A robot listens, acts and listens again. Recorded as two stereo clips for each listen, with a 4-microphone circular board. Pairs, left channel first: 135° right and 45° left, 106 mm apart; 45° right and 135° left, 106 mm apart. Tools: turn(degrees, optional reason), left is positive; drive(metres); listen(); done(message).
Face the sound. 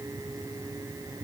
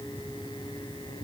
listen()
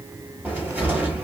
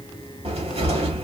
turn(degrees=120, reason="The cupboard door: 120° left.")
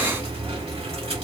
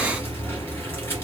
turn(degrees=25, reason="The cupboard door is now 25° left.")
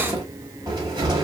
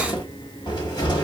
done("Facing the cupboard door.")